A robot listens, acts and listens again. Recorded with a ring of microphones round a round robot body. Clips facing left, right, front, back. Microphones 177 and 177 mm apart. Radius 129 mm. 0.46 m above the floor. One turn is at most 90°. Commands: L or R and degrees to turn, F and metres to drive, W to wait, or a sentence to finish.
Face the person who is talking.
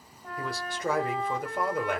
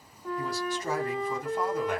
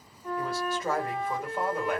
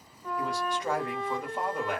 L85
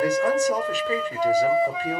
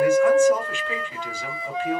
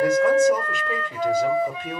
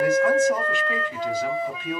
L45
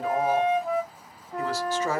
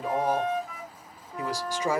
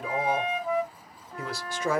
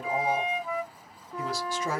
R15
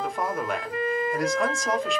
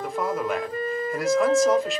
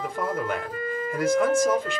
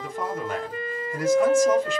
Found it: a man speaking, straight ahead.